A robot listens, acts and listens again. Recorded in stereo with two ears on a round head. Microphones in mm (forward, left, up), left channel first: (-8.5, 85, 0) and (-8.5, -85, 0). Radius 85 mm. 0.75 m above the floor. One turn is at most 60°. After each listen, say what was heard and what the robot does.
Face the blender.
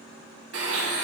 The blender: about 70° right or 110° right. Turn 60° right.
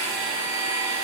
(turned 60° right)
So it is at 20° right. Turn 20° right.
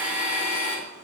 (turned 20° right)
The blender is now 10° right. Turn 10° right.
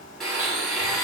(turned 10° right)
Facing the blender.